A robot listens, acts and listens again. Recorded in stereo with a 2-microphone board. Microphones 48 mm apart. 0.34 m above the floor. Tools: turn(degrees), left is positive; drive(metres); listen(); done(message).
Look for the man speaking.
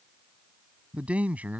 turn(degrees=-35)
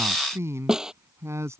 turn(degrees=-110)
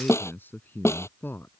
turn(degrees=50)
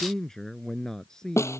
turn(degrees=15)
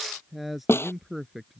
done("Found it: a man speaking, straight ahead.")